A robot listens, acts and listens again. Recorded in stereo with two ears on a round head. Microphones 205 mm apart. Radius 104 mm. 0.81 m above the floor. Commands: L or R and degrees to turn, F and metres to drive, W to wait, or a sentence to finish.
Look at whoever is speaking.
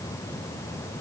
W
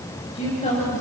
L30
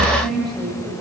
Facing the woman speaking.